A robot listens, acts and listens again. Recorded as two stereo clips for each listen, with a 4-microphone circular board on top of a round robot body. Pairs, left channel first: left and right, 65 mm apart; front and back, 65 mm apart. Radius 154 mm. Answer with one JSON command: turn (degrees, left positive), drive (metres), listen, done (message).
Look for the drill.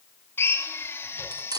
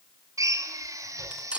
{"turn": 145}
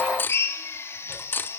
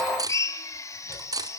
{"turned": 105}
{"turn": 45}
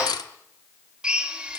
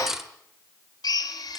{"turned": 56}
{"turn": -15}
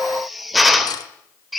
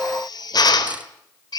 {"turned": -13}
{"done": "Facing the drill."}